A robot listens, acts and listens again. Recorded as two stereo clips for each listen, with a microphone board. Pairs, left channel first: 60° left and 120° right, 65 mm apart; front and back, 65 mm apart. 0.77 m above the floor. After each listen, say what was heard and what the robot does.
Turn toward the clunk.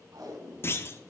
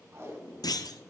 The clunk: 10° left. Turn 10° left.
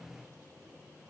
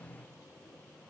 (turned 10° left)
I heard a clunk from this way, but can't make it out now.